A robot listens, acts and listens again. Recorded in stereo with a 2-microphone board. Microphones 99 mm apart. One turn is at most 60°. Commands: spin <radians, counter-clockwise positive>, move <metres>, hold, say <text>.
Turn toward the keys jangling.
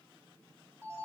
hold
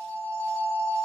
hold
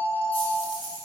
spin 1.05
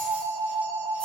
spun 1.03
hold
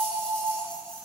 hold
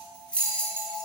spin 0.17
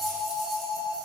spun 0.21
hold
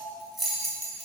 say Found it: keys jangling, straight ahead, 2 to 4 m away.